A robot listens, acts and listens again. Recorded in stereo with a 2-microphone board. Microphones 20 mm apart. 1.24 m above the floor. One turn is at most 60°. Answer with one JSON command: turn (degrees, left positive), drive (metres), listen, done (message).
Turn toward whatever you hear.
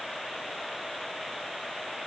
{"listen": true}
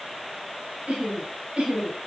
{"turn": -60}
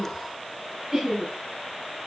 {"turn": -30}
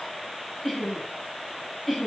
{"done": "Facing the laughter, over 4 m away."}